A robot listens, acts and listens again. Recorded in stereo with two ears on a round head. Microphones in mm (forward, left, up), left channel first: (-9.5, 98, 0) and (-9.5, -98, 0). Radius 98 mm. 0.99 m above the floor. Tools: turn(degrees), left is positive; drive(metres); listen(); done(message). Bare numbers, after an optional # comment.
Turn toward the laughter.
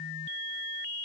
listen()
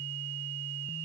listen()
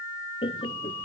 # The laughter: about 25° left or 155° left.
turn(25)
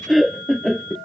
done("Found it: laughter, straight ahead.")